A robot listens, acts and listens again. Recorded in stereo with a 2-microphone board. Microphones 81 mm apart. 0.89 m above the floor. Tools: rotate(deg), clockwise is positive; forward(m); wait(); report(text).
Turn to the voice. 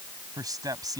rotate(50)
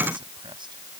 wait()
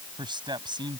rotate(80)
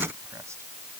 wait()
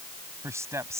rotate(40)
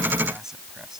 report("Found it: a man speaking, straight ahead.")